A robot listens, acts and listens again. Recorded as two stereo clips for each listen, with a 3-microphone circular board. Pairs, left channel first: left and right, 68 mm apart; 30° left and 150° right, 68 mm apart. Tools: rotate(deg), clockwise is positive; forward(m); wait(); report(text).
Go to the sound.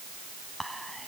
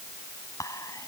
forward(1.0)
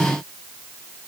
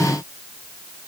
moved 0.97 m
wait()
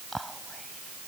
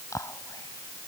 forward(1.0)
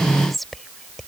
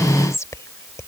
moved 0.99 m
forward(1.0)
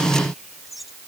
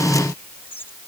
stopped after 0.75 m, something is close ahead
report("I am next to the whispering.")